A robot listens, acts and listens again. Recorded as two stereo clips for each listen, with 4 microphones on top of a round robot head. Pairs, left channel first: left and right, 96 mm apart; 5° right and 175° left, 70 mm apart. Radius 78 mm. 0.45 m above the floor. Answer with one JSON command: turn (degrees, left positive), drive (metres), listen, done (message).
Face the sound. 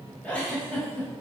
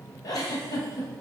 {"turn": 15}
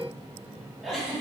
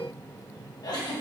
{"done": "Facing the giggle."}